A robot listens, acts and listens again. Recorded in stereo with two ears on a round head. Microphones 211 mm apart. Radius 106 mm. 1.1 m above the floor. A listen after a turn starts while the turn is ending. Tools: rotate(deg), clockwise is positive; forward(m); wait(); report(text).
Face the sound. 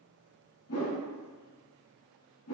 rotate(-70)
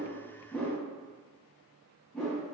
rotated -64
report("Found it: a whoosh, straight ahead, under 1 m away.")